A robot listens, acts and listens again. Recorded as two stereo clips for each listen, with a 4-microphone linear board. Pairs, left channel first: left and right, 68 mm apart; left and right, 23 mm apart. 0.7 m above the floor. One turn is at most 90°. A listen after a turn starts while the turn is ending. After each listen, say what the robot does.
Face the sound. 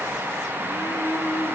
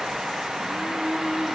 Keep listening.
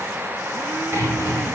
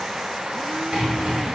Turn 40° right.
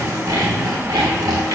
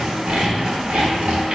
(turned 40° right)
Turn 90° right.
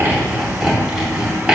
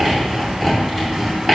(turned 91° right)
Turn 10° right.
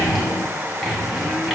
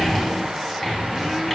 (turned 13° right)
Found it: sawing, straight ahead.